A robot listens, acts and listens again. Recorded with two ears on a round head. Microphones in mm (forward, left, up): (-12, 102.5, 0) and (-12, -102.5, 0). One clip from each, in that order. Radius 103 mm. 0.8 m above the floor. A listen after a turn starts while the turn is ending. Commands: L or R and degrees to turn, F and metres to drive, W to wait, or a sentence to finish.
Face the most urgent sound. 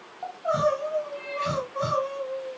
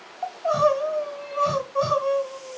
R30
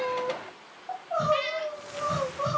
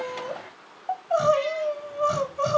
R115
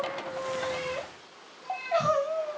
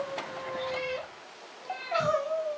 Found it: crying, straight ahead.